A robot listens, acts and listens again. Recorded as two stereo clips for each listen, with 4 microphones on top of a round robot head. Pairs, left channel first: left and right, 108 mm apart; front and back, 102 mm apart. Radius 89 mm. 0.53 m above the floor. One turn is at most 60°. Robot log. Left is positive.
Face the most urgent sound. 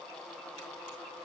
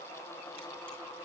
cmd idle
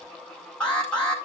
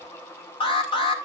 note: The alarm: 10° left.
cmd yaw +10
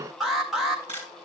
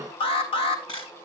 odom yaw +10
end: Found it: an alarm, straight ahead, 1 to 2 m away.